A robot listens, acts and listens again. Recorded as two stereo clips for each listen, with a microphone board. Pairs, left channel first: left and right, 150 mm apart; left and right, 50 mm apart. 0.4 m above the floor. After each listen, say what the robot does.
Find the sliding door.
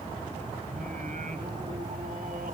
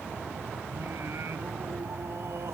Keep listening.
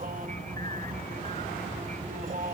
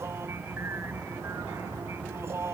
Keep listening.
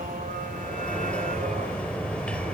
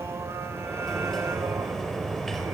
Turn 30° left.
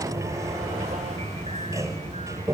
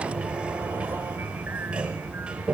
Turn 20° right.
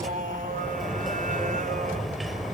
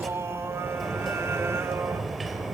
Facing the sliding door.